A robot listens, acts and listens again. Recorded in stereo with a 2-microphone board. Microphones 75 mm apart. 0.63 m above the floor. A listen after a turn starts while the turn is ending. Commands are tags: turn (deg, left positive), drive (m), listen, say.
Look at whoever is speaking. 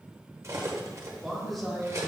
<turn deg="30"/>
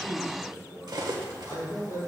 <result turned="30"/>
<turn deg="125"/>
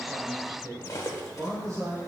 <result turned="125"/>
<turn deg="-50"/>
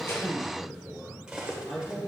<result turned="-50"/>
<turn deg="10"/>
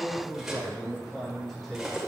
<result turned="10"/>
<say>Found it: a man speaking, straight ahead.</say>